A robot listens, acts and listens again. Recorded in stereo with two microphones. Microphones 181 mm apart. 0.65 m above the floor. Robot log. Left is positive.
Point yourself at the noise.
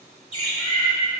note: The bird: about 35° left or 145° left.
cmd yaw +35
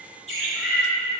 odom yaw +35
end: Found it: a bird, straight ahead, 1 to 2 m away.